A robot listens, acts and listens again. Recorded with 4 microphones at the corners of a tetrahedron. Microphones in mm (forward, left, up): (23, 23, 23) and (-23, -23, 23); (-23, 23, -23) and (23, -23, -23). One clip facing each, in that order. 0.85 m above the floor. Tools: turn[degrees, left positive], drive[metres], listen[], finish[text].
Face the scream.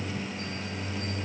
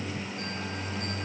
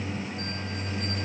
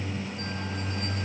Action: listen[]
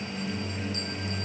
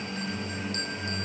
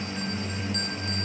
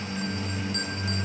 Action: listen[]
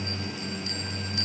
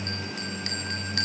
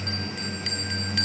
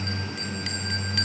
Action: finish[I can't make out a scream, only a bell.]